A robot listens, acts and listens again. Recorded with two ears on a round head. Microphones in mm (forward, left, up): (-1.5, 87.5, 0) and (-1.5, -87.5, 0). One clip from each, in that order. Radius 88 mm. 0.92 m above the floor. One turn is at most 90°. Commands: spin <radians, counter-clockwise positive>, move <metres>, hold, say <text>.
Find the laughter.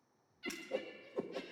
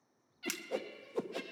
spin -0.35
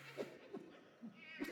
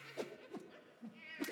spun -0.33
spin -0.35
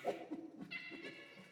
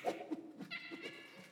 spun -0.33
spin -0.26
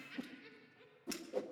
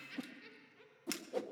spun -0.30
spin -0.26
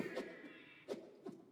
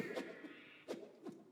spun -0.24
spin -0.52
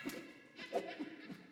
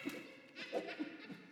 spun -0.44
spin -1.57
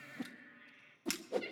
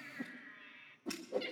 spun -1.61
spin -0.61
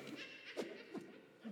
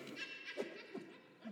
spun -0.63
say Found it: laughter, straight ahead.